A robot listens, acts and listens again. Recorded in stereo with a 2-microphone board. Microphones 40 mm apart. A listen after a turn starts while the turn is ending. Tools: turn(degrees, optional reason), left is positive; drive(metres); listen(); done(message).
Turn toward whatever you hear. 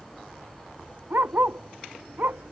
turn(degrees=-55, reason="The dog barking: about 55° right or 125° right.")
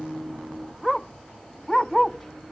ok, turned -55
done("Found it: a dog barking, straight ahead.")